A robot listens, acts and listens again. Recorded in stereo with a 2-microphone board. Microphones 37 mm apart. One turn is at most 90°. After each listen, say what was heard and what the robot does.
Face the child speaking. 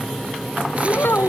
The child speaking: about 65° left or 115° left. Turn 65° left.
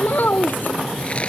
So it is at 55° left. Turn 55° left.
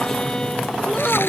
Keep listening.
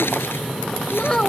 The child speaking is now 15° left. Turn 15° left.
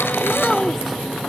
Keep listening.
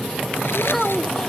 Found it: a child speaking, straight ahead.